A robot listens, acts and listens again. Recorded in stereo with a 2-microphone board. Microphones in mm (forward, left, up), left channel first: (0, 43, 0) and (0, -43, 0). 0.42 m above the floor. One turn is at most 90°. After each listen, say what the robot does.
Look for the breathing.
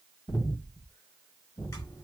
Turn 55° left.
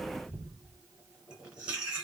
Turn 20° left.
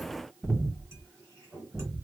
Found it: breathing, straight ahead, 1 to 2 m away.